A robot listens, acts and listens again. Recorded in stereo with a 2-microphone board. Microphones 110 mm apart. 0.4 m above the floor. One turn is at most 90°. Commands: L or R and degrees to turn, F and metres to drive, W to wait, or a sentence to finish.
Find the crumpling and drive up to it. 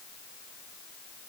W
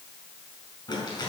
L45
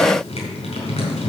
L80
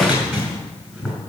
R15
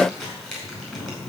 F1.0
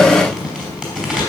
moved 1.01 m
R10
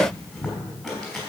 F1.0
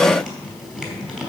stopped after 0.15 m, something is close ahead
Something is in my way. I am facing the crumpling but have not reached it.